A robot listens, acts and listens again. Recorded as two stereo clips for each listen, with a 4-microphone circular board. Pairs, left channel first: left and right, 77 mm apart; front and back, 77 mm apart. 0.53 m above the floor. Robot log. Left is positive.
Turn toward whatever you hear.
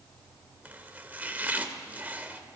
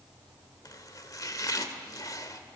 note: The chopping: 25° right.
cmd yaw -25
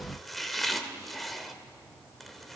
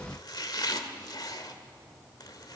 end: Found it: chopping, straight ahead, 1 to 2 m away.